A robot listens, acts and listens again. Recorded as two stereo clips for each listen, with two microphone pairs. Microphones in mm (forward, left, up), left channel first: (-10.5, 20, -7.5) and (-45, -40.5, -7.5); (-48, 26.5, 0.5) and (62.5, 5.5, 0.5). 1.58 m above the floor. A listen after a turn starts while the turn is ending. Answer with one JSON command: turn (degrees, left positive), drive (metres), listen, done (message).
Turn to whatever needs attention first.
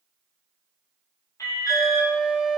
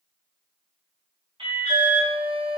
{"turn": 25}
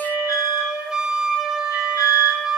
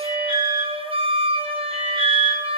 {"turn": 25}
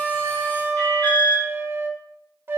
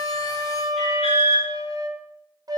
{"done": "Facing the alarm, 2 to 4 m away."}